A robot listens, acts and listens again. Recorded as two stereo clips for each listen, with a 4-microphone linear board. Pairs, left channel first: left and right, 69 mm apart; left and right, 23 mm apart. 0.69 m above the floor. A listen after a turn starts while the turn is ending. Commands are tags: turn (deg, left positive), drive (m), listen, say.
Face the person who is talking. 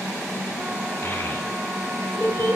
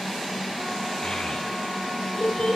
<turn deg="45"/>
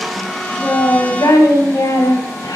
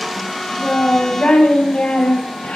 <turn deg="90"/>
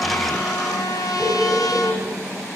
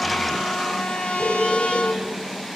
<say>Found it: a child speaking, straight ahead.</say>